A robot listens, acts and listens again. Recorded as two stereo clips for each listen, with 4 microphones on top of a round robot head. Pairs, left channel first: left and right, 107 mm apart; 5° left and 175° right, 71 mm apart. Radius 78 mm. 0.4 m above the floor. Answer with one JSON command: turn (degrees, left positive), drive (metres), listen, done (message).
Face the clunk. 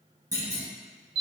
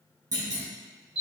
{"turn": -145}
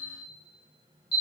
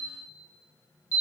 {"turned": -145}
{"done": "Facing where the clunk came from. I can't hear it now."}